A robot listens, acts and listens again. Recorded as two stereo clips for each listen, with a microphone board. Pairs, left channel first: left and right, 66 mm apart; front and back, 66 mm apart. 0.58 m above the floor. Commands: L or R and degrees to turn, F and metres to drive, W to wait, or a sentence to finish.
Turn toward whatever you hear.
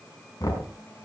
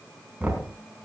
L105
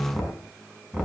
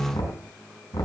R10
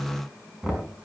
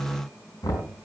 Facing the knocking.